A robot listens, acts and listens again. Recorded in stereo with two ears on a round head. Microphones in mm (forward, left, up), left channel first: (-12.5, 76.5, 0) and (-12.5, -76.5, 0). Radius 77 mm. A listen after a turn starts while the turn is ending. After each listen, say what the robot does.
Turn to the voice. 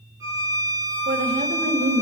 Turn 45° right.
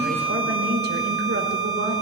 Turn 85° right.
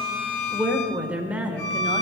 Turn 10° right.
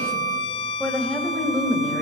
Facing the woman speaking, 1 to 2 m away.